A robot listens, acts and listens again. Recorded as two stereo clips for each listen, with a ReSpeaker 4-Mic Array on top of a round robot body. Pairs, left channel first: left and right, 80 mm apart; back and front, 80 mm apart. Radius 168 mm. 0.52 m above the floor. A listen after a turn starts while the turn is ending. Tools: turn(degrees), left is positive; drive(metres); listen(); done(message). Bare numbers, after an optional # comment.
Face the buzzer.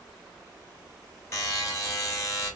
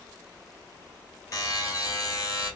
# The buzzer: 140° left.
turn(140)
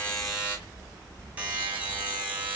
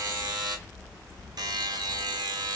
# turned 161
# The buzzer is now 20° right.
turn(-20)
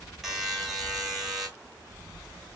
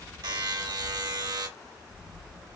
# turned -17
done("Found it: a buzzer, straight ahead.")